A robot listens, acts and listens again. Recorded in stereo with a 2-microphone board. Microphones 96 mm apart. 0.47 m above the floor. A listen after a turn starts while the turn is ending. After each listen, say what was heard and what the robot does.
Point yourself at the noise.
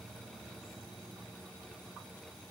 Keep listening.
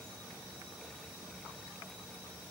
Keep listening.
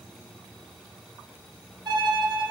The violin: about 45° right or 135° right. Turn 45° right.
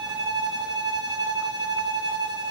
So it is at 90° right. Turn 90° right.
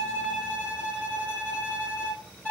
The violin is now 15° left. Turn 15° left.
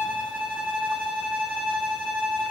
Facing the violin, under 1 m away.